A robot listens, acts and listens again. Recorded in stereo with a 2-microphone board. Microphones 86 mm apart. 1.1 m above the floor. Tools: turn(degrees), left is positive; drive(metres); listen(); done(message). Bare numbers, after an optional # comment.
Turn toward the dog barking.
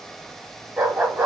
# The dog barking: about 25° right or 155° right.
turn(-25)
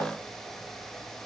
listen()
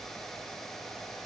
listen()
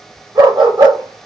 # So it is at 115° right.
turn(-115)
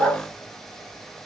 # The dog barking is now 15° left.
turn(15)
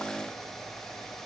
listen()
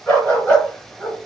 # The dog barking is now 10° left.
turn(10)
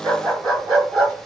done("Facing the dog barking, 2 to 4 m away.")